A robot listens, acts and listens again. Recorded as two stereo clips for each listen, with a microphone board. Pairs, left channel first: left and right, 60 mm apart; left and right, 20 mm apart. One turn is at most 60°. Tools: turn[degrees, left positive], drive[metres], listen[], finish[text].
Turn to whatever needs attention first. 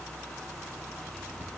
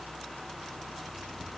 Action: listen[]
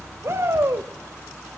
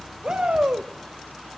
Thought: The shout: about 50° right or 130° right.
Action: turn[-50]
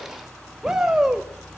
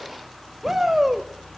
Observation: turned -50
Thought: So it is at 10° right.
Action: turn[-10]
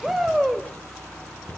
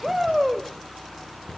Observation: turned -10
Action: finish[Facing the shout.]